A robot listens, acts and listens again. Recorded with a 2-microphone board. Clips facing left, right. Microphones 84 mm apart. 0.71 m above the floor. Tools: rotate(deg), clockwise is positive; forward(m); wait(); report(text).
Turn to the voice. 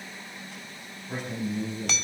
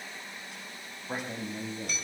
rotate(45)
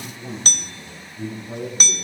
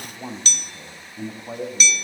rotate(75)
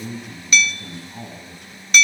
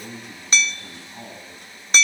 rotate(-10)
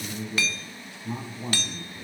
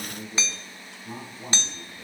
report("Found it: a man speaking, straight ahead, over 4 m away.")